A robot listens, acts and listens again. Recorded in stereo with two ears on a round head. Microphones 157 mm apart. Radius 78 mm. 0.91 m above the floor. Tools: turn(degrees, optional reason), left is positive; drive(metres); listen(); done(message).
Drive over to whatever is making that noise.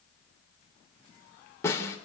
turn(degrees=15, reason="The snare drum: about 15° left or 165° left.")
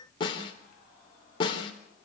turn(degrees=150, reason="So it is at 150° left.")
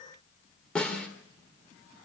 drive(metres=1.0)
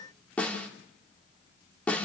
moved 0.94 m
turn(degrees=10, reason="The snare drum is now 10° left.")
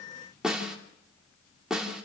drive(metres=1.0)
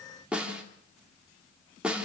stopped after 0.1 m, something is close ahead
done("Something is in my way. I am facing the snare drum but have not reached it.")